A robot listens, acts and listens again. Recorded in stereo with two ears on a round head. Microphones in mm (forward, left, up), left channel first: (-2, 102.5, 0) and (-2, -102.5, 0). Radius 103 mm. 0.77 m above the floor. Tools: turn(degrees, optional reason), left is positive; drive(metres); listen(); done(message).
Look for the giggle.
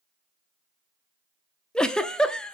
turn(degrees=30)
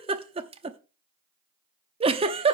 turn(degrees=-25, reason="So it is at 25° right.")
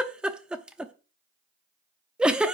done("Found it: a giggle, straight ahead.")